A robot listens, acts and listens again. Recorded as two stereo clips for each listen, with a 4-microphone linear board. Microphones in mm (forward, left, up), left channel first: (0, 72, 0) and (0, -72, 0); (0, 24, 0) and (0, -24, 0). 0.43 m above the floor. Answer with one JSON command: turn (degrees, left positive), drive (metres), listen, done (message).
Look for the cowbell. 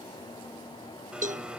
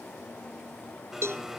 {"turn": -55}
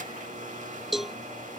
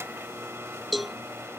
{"done": "Found it: a cowbell, straight ahead."}